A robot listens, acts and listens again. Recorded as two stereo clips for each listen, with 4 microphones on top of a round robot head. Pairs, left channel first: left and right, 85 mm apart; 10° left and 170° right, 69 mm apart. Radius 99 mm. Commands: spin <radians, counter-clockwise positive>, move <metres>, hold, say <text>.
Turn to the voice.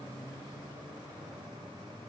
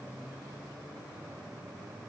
hold
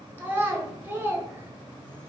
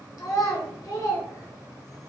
spin -0.35
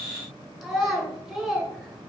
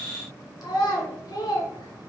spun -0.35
say Found it: a child speaking, straight ahead, 1 to 2 m away.